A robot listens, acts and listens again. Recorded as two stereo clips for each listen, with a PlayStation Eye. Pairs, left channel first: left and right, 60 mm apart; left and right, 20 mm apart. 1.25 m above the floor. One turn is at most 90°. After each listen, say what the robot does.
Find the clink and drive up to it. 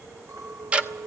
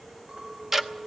Turn 55° right.
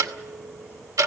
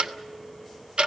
Keep listening.
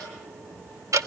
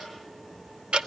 Keep listening.
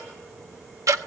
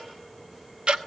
I heard a clink, but can't make it out now. It was about straight ahead or 70° right. I did not reach it.